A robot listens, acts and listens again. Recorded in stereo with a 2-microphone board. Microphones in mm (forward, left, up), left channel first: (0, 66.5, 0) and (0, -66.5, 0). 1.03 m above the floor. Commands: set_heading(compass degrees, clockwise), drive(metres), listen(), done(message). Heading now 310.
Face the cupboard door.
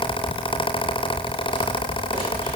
listen()
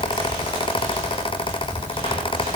listen()
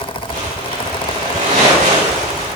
done("I can't make out a cupboard door, only crumpling.")